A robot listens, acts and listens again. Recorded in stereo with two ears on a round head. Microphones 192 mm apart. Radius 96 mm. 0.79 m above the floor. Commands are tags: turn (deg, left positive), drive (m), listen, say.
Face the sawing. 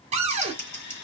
<turn deg="50"/>
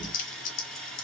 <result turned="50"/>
<say>Facing the sawing.</say>